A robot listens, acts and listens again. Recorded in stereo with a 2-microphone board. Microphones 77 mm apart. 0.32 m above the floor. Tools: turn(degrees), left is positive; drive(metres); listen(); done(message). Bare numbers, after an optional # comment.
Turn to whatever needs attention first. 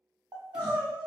# The crying: about 70° right or 110° right.
turn(-70)
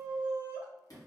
# So it is at 25° right.
turn(-25)
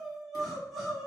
done("Found it: crying, straight ahead, under 1 m away.")